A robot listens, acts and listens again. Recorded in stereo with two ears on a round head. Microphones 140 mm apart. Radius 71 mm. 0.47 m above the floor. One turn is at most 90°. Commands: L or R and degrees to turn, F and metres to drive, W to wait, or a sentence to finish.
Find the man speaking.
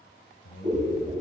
L65
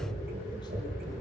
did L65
W
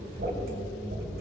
W
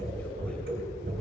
I heard a man speaking, but can't make it out now. It was about straight ahead or 50° left.